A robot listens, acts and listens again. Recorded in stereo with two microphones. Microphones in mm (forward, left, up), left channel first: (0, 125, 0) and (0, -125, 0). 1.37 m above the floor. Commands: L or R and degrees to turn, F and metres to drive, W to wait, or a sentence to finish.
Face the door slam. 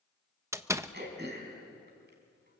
R30
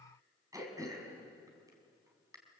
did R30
W
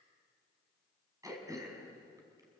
I heard a door slam, but can't make it out now. It was about 20° left or 140° right.